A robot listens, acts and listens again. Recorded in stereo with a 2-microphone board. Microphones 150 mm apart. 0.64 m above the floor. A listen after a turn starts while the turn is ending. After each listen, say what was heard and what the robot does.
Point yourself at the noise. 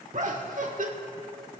The laughter: about 60° right or 120° right. Turn 60° right.
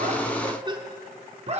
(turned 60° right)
So it is at 45° right. Turn 45° right.
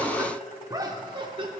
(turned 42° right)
The laughter is now 35° right. Turn 35° right.
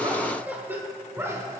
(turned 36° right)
The laughter is now 20° right. Turn 20° right.
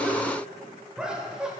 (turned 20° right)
Found it: laughter, straight ahead.